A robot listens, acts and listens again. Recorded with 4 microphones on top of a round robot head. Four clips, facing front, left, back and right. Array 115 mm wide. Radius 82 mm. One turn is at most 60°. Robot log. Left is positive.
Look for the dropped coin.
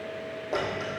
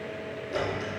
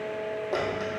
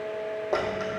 note: The dropped coin: 95° right.
cmd yaw -60
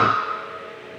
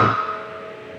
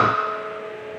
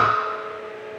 note: Nothing new. It was at 35° right.
cmd yaw -35
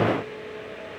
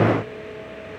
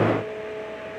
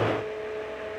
end: Facing where the dropped coin came from. I can't hear it now.